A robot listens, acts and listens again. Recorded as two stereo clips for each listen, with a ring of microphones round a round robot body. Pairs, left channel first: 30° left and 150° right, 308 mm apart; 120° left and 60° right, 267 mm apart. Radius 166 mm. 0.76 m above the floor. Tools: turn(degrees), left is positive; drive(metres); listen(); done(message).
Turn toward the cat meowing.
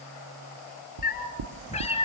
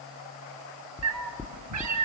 turn(degrees=-45)
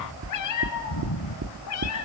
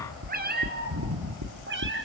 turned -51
turn(degrees=-15)
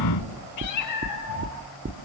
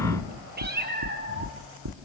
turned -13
turn(degrees=-10)
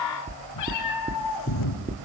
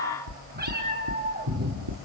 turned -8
done("Facing the cat meowing.")